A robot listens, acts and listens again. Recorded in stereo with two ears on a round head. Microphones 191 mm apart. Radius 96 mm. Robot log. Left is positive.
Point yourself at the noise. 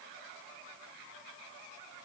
cmd idle
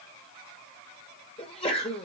note: The sneeze: about 30° left or 150° left.
cmd yaw +30
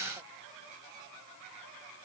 cmd idle
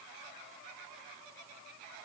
end: I heard a sneeze, but can't make it out now. It was about straight ahead or 120° left.